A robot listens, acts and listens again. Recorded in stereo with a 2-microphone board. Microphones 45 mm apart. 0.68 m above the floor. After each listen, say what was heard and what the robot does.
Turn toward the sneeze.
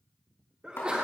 The sneeze: about 25° right or 155° right. Turn 25° right.
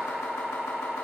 Keep listening.
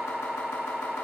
I heard a sneeze, but can't make it out now. It was about straight ahead or 130° right.